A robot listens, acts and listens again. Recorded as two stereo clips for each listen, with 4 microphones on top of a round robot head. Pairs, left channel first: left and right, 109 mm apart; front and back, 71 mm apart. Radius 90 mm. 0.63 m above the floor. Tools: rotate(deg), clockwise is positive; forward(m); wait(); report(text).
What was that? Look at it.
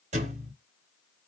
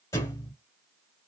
rotate(60)
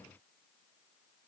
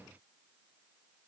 report("I heard a thud from this way, but can't make it out now.")